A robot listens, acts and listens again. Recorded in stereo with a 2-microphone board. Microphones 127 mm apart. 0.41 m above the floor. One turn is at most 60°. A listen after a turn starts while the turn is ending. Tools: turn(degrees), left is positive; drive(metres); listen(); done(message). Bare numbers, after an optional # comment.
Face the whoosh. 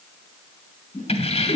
turn(60)
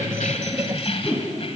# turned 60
# So it is at 20° left.
turn(20)
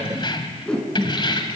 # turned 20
done("Facing the whoosh.")